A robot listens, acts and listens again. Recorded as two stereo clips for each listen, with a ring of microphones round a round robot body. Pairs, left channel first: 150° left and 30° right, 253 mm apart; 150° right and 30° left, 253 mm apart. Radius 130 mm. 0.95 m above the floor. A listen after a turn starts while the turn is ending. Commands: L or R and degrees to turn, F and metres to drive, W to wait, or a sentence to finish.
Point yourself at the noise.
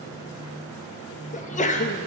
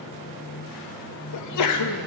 R150
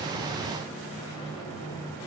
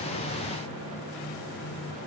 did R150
I heard a sneeze from this way, but can't make it out now.